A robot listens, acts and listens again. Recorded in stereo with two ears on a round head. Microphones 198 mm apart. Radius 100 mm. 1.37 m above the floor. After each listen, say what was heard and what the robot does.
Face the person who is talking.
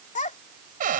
The child speaking: about 35° left or 145° left. Turn 35° left.
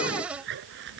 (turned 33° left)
Keep listening.
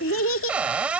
So it is at 110° left. Turn 110° left.
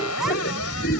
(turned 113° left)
Keep listening.
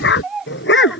Facing the child speaking.